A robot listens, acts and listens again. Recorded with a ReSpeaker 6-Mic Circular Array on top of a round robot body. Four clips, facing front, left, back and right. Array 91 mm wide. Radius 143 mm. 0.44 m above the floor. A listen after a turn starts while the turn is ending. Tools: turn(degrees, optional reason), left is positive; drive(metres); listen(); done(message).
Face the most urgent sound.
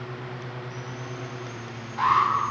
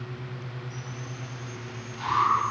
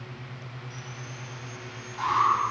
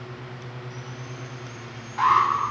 turn(degrees=-65, reason="The alarm: 65° right.")
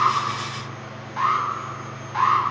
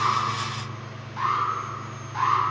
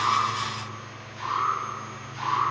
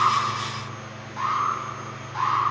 done("Found it: an alarm, straight ahead.")